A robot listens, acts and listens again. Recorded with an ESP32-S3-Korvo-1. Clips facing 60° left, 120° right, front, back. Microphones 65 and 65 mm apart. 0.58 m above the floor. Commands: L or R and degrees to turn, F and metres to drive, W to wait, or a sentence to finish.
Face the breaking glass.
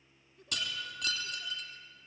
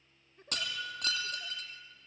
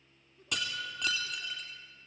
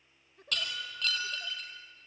R75
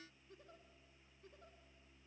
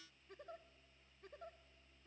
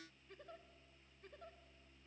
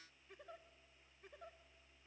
Facing where the breaking glass came from. I can't hear it now.